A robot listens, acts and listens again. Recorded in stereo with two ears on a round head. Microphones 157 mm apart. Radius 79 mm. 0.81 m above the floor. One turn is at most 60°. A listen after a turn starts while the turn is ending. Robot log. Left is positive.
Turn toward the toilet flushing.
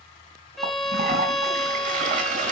note: The toilet flushing: about 45° right or 135° right.
cmd yaw -45
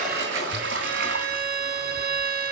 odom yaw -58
note: So it is at 75° right.
cmd yaw -60
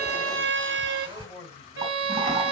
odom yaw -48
note: The toilet flushing is now 30° right.
cmd yaw -30
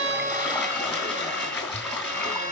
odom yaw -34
end: Facing the toilet flushing, 2 to 4 m away.